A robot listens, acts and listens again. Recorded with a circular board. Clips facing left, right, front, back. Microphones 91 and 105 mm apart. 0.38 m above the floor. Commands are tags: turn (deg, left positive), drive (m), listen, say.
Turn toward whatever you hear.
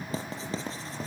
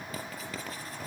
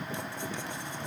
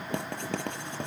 <turn deg="155"/>
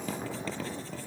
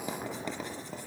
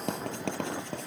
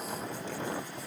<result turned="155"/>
<turn deg="-15"/>
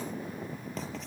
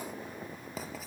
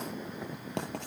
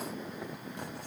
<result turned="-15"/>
<say>Found it: writing, straight ahead.</say>